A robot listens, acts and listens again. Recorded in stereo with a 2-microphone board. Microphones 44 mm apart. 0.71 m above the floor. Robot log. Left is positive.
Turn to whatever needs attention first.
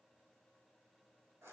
cmd idle
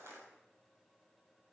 cmd idle
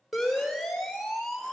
cmd yaw +30
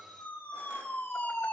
note: So it is at 150° left.
cmd yaw +150
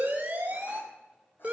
note: The siren is now 30° right.
cmd yaw -30
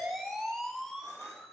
end: Found it: a siren, straight ahead.